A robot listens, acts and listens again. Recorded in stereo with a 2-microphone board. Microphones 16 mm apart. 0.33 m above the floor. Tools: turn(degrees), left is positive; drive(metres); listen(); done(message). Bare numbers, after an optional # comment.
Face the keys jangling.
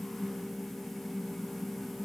listen()
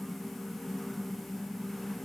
listen()
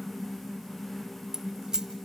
# The keys jangling: about 45° right or 135° right.
turn(-45)
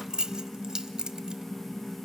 # So it is at 80° right.
turn(-80)
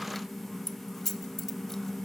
# The keys jangling is now 25° left.
turn(25)
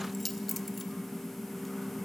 done("Found it: keys jangling, straight ahead.")